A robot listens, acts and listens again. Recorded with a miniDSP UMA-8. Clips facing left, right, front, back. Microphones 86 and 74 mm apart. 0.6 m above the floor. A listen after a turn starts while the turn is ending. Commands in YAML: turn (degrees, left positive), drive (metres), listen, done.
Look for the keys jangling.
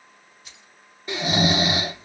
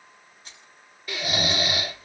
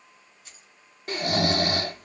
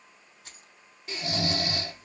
turn: -150
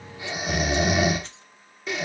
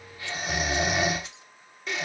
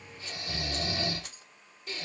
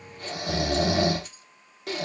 turn: -10
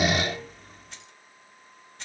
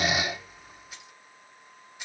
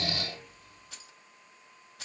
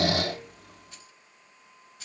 turn: -10
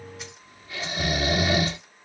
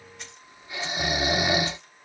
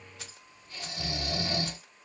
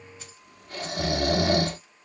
listen: true
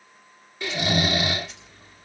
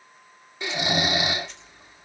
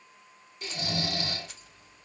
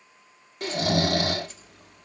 listen: true
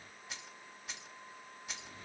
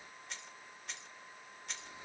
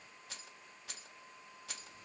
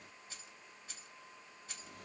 done: "Facing the keys jangling."